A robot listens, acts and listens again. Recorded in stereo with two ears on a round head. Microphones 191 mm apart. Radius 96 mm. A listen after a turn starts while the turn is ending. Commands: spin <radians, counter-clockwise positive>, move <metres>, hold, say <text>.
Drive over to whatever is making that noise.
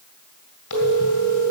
spin 1.57
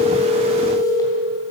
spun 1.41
spin 0.26
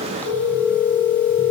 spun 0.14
spin 0.17
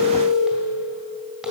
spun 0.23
move 1.0
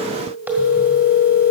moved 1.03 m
spin -0.17
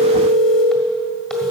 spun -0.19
move 1.0
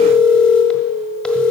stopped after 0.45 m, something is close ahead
say I am next to the phone ringing.